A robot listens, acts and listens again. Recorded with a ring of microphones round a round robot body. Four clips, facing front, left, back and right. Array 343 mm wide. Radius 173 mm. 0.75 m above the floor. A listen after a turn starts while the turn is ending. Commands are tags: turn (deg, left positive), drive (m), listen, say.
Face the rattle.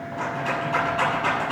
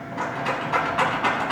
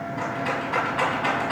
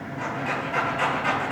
<turn deg="95"/>
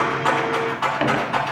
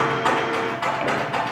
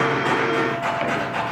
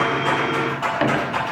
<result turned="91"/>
<say>Found it: a rattle, straight ahead, over 4 m away.</say>